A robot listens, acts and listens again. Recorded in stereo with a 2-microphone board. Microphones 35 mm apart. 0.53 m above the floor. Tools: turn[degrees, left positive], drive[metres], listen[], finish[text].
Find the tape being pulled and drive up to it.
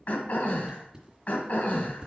Thought: The tape being pulled: about 25° right or 155° right.
Action: turn[-25]
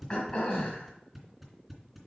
Action: drive[1.0]
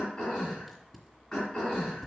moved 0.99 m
Action: drive[1.0]
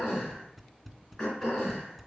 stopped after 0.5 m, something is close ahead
Action: finish[Arrived at the tape being pulled, straight ahead.]